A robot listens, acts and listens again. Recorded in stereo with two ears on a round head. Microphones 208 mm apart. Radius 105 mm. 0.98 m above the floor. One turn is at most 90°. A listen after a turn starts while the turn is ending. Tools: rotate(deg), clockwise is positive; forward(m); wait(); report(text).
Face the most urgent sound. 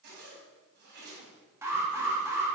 rotate(30)
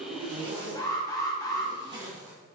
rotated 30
rotate(-15)
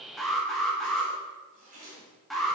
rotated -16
report("Facing the alarm, 1 to 2 m away.")